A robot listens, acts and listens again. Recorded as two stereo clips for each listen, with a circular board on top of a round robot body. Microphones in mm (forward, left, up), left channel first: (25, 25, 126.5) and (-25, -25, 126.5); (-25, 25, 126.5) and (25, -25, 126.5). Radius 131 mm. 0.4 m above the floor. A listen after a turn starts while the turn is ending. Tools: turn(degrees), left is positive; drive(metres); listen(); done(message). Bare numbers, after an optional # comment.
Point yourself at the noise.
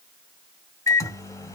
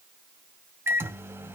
# The microwave: 10° left.
turn(10)
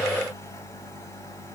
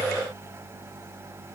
done("Facing the microwave, 1 to 2 m away.")